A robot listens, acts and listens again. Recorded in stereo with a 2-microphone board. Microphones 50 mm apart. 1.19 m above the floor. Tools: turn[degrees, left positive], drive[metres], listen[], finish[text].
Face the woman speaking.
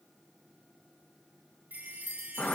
Action: listen[]
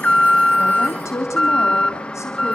Action: turn[90]
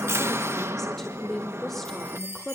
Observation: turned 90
Action: finish[Facing the woman speaking, over 4 m away.]